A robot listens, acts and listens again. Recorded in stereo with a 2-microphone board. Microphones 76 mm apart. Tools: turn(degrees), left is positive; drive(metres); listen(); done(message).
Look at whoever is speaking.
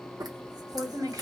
turn(degrees=-50)
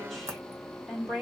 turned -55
done("Found it: a woman speaking, straight ahead.")